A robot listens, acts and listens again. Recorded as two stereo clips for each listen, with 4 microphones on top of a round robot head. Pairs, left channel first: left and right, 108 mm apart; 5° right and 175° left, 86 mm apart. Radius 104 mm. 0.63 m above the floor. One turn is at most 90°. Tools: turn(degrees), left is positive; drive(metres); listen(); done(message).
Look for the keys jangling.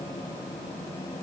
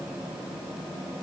listen()
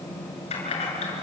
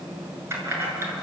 turn(degrees=90)
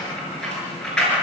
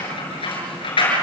done("Found it: keys jangling, straight ahead.")